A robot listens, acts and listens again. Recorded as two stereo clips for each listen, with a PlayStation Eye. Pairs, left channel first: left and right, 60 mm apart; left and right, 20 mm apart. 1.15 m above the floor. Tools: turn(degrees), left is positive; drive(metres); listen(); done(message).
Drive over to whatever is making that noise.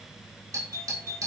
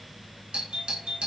turn(degrees=-90)
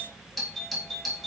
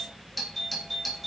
drive(metres=1.0)
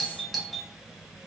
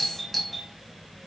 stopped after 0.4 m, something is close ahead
done("Something is in my way. I am facing the doorbell but have not reached it.")